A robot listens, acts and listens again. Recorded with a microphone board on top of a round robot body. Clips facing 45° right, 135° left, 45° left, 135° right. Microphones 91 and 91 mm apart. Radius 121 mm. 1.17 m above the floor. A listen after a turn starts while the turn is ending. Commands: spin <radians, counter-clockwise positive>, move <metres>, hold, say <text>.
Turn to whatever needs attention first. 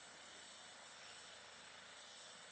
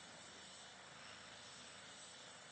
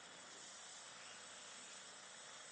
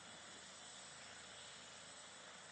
hold
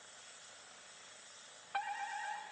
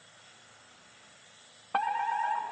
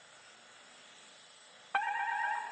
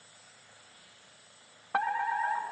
spin 2.71
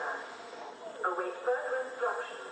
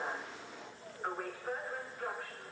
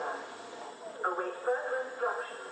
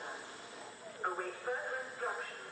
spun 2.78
say Found it: a fire alarm, straight ahead.